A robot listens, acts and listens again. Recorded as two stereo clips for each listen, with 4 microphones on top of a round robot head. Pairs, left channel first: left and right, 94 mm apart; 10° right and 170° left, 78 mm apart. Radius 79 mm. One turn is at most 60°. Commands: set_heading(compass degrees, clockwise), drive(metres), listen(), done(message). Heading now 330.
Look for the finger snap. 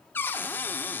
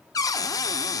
listen()
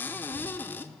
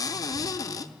listen()
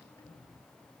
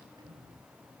done("I can't make out a finger snap, only a cupboard door and a sliding door.")